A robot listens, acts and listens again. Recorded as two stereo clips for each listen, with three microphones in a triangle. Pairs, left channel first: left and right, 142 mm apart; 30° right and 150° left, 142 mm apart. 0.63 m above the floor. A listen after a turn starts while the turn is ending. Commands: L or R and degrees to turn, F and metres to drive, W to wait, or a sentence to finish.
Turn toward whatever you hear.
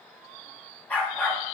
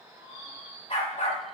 L10
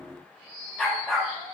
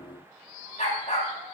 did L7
Found it: a dog barking, straight ahead.